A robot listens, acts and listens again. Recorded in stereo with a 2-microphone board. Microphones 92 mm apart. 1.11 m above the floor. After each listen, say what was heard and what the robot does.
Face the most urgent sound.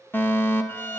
The fire alarm: about 25° left or 155° left. Turn 25° left.
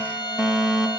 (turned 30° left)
Facing the fire alarm, 2 to 4 m away.